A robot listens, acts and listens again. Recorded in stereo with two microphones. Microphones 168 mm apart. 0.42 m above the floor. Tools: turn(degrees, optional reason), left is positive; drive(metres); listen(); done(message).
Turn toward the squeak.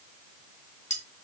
listen()
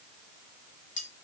listen()
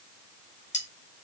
done("I can't make out a squeak to turn to.")